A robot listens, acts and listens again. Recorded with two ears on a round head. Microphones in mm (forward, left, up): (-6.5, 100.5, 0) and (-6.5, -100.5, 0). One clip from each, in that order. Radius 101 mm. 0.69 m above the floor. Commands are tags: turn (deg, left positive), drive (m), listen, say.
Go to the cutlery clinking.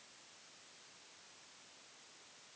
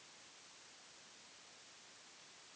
<listen/>
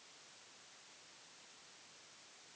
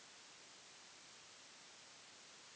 <listen/>
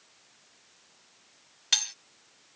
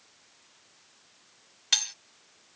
<turn deg="30"/>
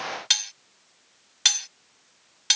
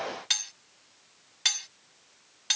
<turn deg="150"/>
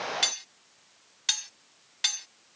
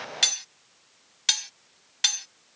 <turn deg="-15"/>
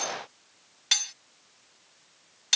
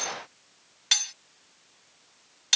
<drive m="1.0"/>
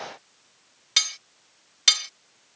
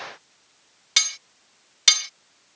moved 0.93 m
<turn deg="-10"/>
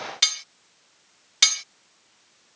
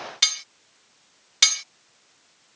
<drive m="1.0"/>
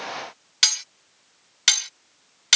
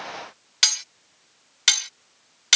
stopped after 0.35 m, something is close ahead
<say>Arrived at the cutlery clinking, straight ahead.</say>